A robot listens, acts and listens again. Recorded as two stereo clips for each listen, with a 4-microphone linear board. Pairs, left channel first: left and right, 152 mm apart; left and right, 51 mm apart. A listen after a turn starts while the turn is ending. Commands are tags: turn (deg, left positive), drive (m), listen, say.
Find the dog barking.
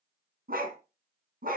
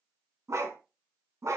<turn deg="-70"/>
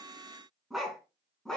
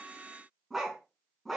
<say>Facing the dog barking.</say>